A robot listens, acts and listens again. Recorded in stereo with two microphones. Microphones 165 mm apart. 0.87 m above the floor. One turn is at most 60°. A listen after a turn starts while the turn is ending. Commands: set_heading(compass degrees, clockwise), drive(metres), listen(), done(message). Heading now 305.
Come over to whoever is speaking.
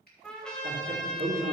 set_heading(5)
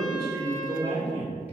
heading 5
set_heading(40)
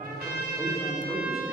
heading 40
drive(1.0)
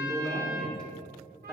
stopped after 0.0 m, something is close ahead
done("Something is in my way. I am facing the man speaking but have not reached it.")